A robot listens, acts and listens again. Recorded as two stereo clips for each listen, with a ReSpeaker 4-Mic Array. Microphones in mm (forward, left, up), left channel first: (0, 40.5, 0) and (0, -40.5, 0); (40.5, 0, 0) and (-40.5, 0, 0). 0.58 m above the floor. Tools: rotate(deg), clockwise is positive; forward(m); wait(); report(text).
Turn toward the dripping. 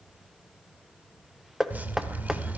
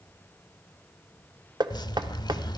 rotate(25)
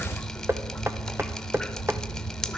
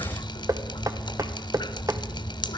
report("Facing the dripping, under 1 m away.")